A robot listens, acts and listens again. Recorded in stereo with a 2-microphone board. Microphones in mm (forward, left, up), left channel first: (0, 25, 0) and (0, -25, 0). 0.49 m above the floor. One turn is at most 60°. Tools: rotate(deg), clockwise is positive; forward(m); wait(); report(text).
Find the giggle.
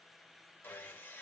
wait()
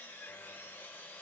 wait()
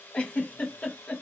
rotate(-25)
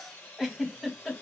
report("Found it: a giggle, straight ahead.")